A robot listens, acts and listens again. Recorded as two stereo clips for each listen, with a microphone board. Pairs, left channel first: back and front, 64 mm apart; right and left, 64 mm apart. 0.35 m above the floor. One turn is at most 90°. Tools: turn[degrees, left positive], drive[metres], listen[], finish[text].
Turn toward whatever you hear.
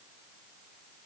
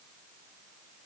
Action: listen[]
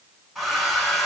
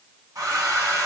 Thought: The hair dryer: 90° left.
Action: turn[90]
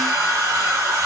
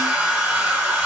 Thought: The hair dryer is now 15° left.
Action: turn[15]
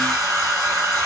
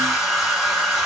Action: finish[Facing the hair dryer.]